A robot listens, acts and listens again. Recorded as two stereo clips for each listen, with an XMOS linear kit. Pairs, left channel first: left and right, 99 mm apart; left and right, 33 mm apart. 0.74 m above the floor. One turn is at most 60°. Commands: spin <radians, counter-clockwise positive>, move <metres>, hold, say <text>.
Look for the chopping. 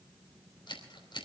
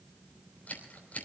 hold
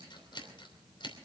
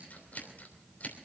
hold
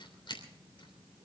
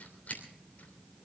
say I can't make out chopping to turn to.